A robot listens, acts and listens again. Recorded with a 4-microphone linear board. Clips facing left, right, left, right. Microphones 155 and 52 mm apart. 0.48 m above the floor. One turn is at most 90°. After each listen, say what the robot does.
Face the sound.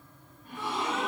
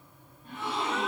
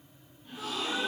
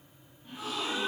Turn 25° right.
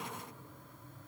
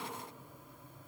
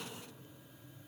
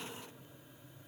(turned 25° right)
Keep listening.
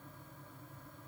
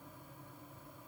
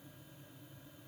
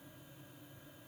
I heard a gasp, but can't make it out now. It was about straight ahead or 130° right.